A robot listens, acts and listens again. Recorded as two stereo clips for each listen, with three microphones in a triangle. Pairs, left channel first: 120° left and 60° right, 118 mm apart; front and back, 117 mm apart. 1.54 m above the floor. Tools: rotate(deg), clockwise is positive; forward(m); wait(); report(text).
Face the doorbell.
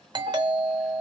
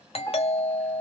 rotate(15)
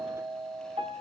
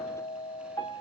report("Facing the doorbell, 1 to 2 m away.")